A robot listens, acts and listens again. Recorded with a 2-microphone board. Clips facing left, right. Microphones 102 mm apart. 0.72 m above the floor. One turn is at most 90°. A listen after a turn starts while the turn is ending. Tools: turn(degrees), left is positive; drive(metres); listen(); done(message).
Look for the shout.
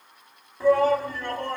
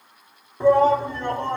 turn(degrees=-25)
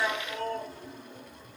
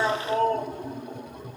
turn(degrees=-90)
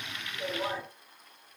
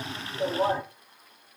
turn(degrees=-55)
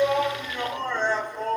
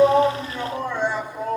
turn(degrees=-10)
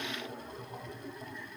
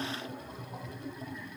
done("Facing the shout, 1 to 2 m away.")